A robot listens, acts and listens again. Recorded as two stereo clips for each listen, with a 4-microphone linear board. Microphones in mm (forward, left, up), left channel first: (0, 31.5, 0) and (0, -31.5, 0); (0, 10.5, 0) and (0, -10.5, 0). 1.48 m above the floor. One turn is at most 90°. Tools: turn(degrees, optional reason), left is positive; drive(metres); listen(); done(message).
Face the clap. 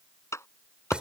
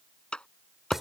turn(degrees=50, reason="The clap: about 50° left or 130° left.")
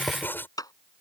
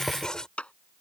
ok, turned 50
turn(degrees=80, reason="So it is at 80° left.")
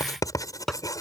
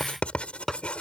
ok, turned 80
listen()
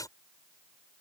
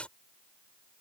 listen()
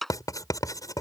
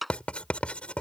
done("Found it: a clap, straight ahead.")